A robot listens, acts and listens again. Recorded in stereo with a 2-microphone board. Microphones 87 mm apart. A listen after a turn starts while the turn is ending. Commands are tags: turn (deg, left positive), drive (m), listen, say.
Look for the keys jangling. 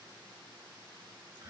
<listen/>
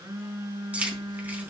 <turn deg="-15"/>
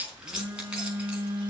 <turn deg="-30"/>
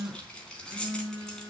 <turn deg="10"/>
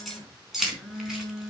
<say>Facing the keys jangling, over 4 m away.</say>